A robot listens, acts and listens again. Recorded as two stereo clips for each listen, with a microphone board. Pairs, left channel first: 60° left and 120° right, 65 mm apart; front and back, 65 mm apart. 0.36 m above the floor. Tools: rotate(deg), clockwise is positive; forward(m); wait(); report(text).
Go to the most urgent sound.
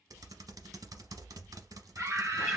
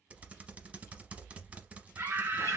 rotate(150)
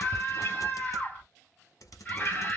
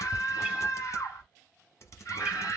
forward(1.0)
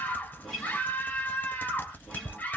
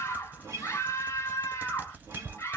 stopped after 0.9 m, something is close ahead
report("I am next to the scream.")